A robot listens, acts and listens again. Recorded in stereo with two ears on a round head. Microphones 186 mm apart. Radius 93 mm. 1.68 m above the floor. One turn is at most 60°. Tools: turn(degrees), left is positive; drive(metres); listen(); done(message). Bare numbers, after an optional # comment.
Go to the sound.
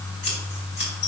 # The scissors: about 55° left or 125° left.
turn(55)
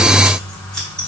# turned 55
drive(1.0)
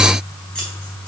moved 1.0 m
listen()
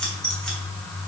drive(1.0)
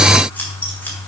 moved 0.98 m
# The scissors is now 10° left.
turn(10)
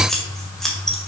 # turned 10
drive(1.0)
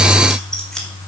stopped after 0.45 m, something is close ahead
done("Arrived at the scissors, straight ahead.")